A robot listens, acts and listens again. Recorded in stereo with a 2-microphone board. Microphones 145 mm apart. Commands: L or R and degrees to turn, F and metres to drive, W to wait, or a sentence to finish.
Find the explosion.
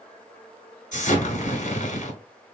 L65
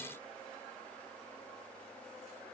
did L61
W
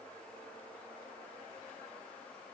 I heard an explosion, but can't make it out now. It was about 5° left or 55° left.